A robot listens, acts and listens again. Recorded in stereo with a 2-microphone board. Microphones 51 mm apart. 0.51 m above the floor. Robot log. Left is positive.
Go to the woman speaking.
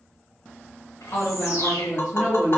note: The woman speaking: about 25° left or 155° left.
cmd yaw +25
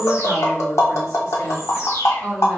cmd fwd 1.0
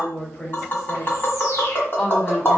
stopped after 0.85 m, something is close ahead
end: Arrived at the woman speaking, straight ahead.